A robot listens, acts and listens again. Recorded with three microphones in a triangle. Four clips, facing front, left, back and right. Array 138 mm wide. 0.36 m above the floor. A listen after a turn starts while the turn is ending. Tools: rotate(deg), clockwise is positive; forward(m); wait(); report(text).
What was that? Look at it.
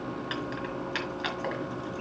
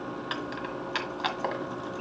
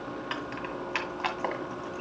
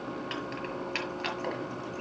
rotate(-135)
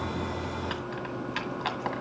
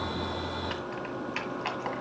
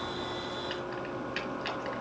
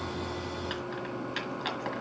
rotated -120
rotate(-15)
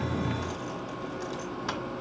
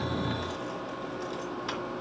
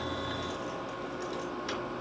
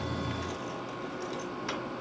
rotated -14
report("Facing the keys jangling.")